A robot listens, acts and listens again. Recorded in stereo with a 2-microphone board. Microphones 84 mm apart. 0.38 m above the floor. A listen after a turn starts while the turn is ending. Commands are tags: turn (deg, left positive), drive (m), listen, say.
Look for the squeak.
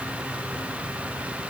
<listen/>
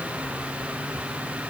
<listen/>
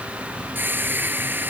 <turn deg="-25"/>
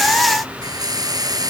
<turn deg="-130"/>
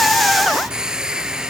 <turn deg="-10"/>
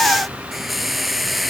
<say>Facing the squeak.</say>